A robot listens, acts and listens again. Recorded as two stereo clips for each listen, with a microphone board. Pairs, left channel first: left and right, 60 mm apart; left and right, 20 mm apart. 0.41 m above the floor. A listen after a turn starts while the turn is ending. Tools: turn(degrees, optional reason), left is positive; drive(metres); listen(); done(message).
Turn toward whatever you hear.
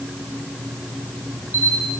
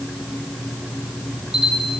turn(degrees=-35, reason="The camera shutter: about 35° right or 145° right.")
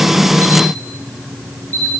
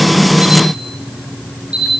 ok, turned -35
turn(degrees=-110, reason="So it is at 110° right.")
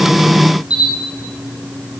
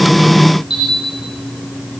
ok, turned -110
turn(degrees=-15, reason="The camera shutter is now 15° right.")
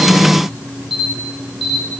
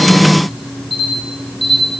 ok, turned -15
done("Found it: a camera shutter, straight ahead, 2 to 4 m away.")